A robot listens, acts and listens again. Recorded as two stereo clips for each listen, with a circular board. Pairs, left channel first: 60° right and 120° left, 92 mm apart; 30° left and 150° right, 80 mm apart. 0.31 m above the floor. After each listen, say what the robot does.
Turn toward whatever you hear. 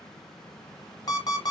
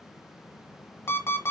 Turn 25° right.
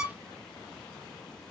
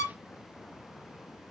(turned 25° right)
Turn 10° right.
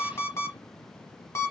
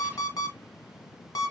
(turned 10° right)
Facing the alarm clock, 1 to 2 m away.